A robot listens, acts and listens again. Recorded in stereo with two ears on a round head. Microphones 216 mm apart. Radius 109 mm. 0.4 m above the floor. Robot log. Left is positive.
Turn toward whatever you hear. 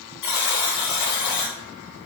cmd yaw +90
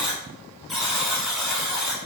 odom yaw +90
end: Facing the buzzer, under 1 m away.